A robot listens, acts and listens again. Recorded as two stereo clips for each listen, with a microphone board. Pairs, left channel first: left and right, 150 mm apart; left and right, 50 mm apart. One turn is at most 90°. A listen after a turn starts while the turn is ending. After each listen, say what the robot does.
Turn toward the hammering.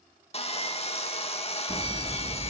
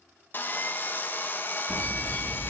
Turn 25° right.
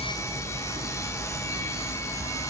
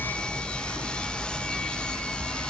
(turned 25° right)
Turn 90° right.
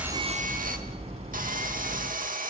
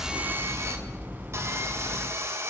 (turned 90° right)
Turn 45° right.
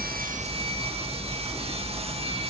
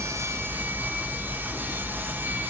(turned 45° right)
Turn 25° left.
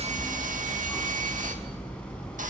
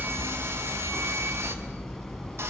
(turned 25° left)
Facing the hammering.